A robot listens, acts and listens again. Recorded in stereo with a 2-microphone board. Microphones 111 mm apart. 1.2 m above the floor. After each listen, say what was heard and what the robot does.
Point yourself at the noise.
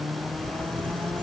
Turn 30° left.
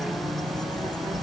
So it is at 140° left. Turn 140° left.
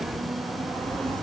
The bird is now 10° left. Turn 10° left.
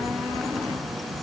Facing the bird.